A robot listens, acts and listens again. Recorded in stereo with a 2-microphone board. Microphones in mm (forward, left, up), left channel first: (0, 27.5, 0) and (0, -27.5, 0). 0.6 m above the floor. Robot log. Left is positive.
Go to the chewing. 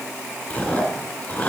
note: The chewing: about 25° left or 155° left.
cmd yaw +25
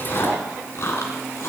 note: So it is at 125° left.
cmd yaw +125
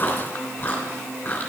note: The chewing is now 40° left.
cmd yaw +40
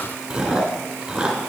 note: The chewing is now 10° right.
cmd yaw -10
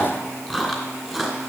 cmd fwd 1.0
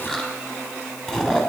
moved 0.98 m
note: The chewing is now 10° left.
cmd yaw +10
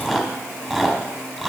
cmd fwd 1.0
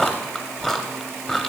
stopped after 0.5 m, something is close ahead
end: I am next to the chewing.